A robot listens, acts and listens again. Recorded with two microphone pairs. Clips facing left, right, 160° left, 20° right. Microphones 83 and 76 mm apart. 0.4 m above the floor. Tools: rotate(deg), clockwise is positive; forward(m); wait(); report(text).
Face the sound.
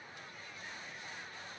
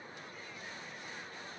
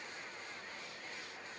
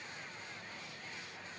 wait()
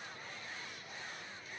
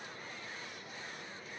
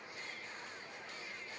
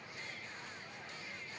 wait()
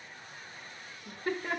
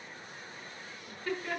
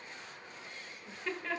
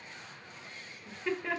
rotate(-55)
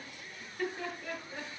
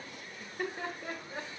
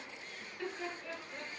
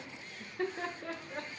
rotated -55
rotate(35)
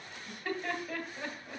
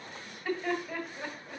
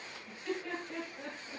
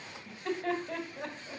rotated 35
report("Found it: laughter, straight ahead, 2 to 4 m away.")